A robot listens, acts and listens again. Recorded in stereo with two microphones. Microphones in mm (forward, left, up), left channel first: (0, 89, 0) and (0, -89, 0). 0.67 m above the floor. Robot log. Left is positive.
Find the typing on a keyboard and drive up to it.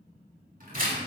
note: The typing on a keyboard: about 55° right or 125° right.
cmd yaw -55
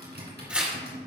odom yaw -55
note: So it is at 70° right.
cmd yaw -70
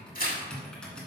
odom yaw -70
cmd fwd 1.0
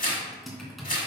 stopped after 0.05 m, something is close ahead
end: Blocked. The typing on a keyboard is further on, straight ahead.